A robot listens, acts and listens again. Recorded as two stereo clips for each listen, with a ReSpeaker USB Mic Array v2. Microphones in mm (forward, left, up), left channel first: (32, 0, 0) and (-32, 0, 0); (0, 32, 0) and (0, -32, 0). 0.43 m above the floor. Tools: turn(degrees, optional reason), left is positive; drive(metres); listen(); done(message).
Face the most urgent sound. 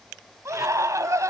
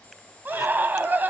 turn(degrees=-150, reason="The scream: 150° right.")
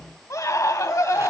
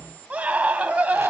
turn(degrees=-25, reason="The scream is now 25° right.")
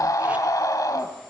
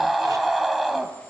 done("Facing the scream, 2 to 4 m away.")